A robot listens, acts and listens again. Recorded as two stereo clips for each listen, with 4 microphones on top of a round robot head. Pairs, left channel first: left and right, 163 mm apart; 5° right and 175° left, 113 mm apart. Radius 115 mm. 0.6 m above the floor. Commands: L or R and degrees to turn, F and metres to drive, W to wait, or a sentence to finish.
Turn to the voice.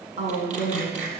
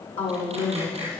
R35
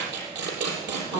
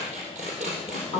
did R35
Facing the woman speaking, over 4 m away.